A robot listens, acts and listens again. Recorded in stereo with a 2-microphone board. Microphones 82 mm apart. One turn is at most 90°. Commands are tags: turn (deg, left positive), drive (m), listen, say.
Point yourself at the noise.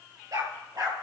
<turn deg="-55"/>
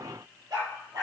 <turn deg="-65"/>
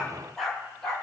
<say>Facing the dog barking, over 4 m away.</say>